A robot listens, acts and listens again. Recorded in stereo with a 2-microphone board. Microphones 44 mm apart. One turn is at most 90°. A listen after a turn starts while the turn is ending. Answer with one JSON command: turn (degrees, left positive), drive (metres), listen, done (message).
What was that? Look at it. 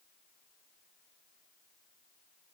{"listen": true}
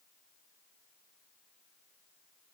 {"listen": true}
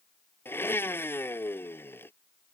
{"turn": 60}
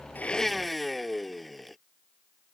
{"done": "Found it: a blender, straight ahead."}